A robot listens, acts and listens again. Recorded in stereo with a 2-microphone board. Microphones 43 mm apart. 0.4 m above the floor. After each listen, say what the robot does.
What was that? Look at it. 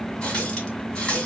Turn 20° left.
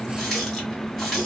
Found it: a running tap, straight ahead.